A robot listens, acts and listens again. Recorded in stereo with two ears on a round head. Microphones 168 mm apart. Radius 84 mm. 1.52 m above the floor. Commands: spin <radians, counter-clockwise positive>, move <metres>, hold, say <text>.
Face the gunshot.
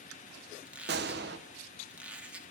spin -1.05
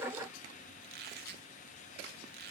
hold
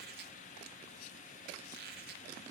say I heard a gunshot, but can't make it out now. It was about straight ahead or 60° right.